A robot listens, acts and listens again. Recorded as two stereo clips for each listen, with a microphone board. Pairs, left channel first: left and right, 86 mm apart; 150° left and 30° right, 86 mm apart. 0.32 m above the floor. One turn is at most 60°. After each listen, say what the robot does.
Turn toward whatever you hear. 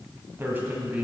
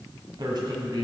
Turn 20° right.
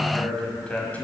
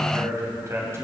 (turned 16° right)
Turn 20° left.
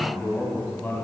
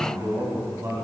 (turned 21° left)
Turn 25° left.
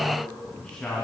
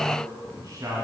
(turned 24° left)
Turn 15° left.
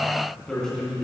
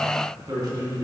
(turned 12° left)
Turn 10° left.
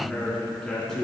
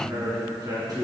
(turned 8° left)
Facing the man speaking, 2 to 4 m away.